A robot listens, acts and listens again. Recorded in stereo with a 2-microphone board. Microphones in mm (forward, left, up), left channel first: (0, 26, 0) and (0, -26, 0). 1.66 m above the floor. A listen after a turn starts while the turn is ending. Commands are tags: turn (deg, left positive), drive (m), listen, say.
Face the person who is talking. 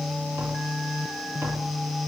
<listen/>
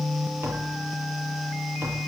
<listen/>
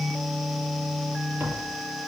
<say>I can't make out anyone speaking to turn to.</say>